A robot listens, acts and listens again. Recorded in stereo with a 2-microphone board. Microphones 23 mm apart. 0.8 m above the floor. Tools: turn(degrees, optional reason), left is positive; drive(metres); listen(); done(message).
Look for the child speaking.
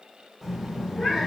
turn(degrees=30)
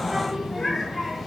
turn(degrees=30)
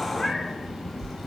turn(degrees=30)
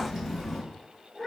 turn(degrees=-30)
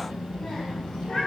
turn(degrees=30, reason="So it is at 30° left.")
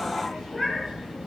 done("Facing the child speaking, 2 to 4 m away.")